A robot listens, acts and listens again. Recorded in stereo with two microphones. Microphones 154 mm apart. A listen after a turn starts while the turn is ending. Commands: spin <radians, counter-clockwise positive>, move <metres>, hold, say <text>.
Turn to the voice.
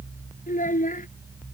spin 1.05
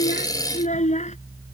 spin 0.87
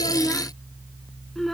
say Found it: a child speaking, straight ahead.